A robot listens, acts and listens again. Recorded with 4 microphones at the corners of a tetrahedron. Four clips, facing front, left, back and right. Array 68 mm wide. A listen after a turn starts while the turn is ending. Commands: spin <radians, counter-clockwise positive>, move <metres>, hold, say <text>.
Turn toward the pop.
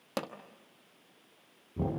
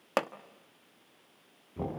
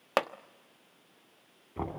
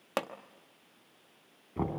spin 2.71
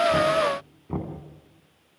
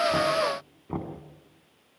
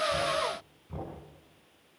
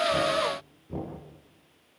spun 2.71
say Facing where the pop came from. I can't hear it now.